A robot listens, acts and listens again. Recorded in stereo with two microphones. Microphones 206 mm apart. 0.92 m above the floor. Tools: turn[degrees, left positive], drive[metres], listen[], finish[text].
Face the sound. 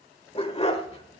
Thought: The dog barking: about 30° left or 150° left.
Action: turn[30]
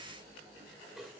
Action: listen[]
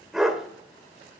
Action: finish[Facing the dog barking.]